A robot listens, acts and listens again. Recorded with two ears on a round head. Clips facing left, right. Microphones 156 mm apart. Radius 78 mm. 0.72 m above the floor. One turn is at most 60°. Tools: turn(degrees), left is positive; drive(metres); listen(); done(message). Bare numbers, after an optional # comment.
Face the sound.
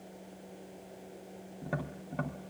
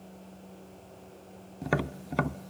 turn(-60)
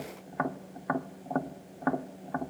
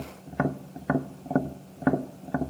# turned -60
# So it is at 30° right.
turn(-30)
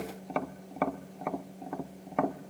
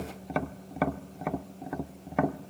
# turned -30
done("Facing the tapping, under 1 m away.")